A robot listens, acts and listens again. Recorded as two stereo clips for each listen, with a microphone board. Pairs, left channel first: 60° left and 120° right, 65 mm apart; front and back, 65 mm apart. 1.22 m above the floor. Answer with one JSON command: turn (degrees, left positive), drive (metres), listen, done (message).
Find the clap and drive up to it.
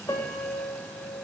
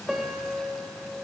{"listen": true}
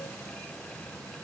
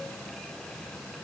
{"listen": true}
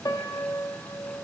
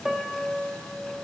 {"done": "I can't make out a clap, only a piano."}